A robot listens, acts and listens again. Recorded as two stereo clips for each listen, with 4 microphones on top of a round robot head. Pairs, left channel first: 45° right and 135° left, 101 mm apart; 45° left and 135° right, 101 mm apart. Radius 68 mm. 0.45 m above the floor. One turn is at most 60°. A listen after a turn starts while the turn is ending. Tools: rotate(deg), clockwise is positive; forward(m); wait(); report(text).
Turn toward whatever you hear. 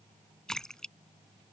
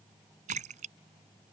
rotate(60)
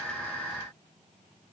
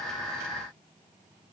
rotate(60)
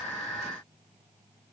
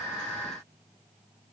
rotate(10)
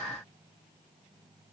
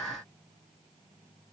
report("I heard a splash from this way, but can't make it out now.")